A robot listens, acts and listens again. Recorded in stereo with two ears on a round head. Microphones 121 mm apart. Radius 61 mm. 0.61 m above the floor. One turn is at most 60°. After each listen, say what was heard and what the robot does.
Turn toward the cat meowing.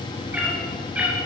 Turn 30° right.
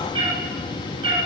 So it is at 140° right. Turn 60° right.
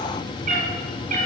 The cat meowing is now 60° right. Turn 60° right.
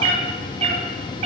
The cat meowing is now 50° right. Turn 50° right.
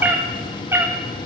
The cat meowing is now 20° right. Turn 20° right.
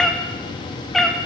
Facing the cat meowing, 1 to 2 m away.